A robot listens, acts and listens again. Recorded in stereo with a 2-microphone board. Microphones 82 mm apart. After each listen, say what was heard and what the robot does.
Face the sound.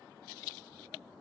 Keep listening.
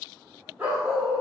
Turn 30° right.
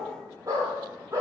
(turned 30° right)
So it is at 145° right. Turn 145° right.
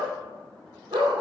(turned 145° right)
The dog barking is now 70° right. Turn 70° right.
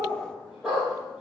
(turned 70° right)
Found it: a dog barking, straight ahead, over 4 m away.